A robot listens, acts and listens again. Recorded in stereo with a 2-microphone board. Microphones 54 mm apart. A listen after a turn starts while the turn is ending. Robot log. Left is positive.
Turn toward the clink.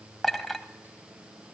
cmd yaw +30
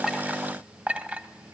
note: So it is at 30° right.
cmd yaw -30
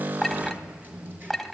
end: Found it: a clink, straight ahead.